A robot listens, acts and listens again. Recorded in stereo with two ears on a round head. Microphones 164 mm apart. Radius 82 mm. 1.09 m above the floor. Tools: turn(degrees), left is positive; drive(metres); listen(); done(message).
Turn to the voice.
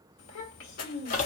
turn(degrees=90)
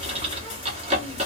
listen()
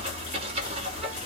listen()
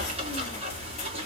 done("Facing where the child speaking came from. I can't hear it now.")